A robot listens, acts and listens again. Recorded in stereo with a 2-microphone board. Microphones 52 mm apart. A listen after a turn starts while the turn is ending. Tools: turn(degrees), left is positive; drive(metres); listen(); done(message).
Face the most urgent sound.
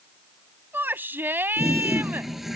turn(degrees=-45)
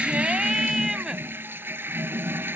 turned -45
listen()
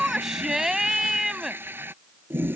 turn(degrees=-10)
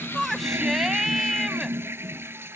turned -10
done("Facing the shout.")